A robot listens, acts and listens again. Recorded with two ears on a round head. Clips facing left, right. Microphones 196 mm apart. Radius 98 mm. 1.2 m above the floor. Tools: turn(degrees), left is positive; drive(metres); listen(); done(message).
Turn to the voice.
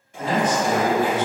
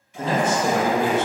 turn(degrees=-25)
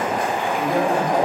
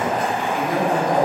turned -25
turn(degrees=-140)
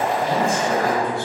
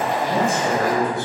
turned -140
turn(degrees=-15)
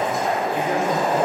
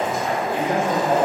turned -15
turn(degrees=-10)
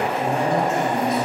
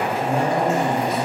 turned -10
done("Facing the man speaking, 1 to 2 m away.")